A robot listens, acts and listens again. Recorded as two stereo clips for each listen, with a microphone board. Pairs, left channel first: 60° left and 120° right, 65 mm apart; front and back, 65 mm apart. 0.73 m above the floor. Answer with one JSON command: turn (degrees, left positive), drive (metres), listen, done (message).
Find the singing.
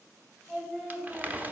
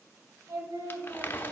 {"turn": 155}
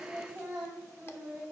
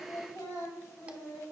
{"turn": -40}
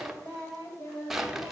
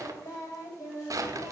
{"turn": 10}
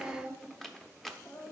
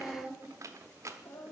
{"done": "Found it: singing, straight ahead."}